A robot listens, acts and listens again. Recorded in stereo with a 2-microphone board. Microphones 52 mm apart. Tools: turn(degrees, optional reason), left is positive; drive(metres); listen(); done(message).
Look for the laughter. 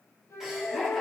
turn(degrees=-30)
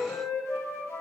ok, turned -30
listen()
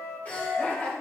turn(degrees=30, reason="So it is at 30° left.")
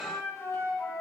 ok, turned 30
listen()
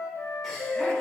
listen()
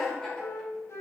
done("Facing the laughter, over 4 m away.")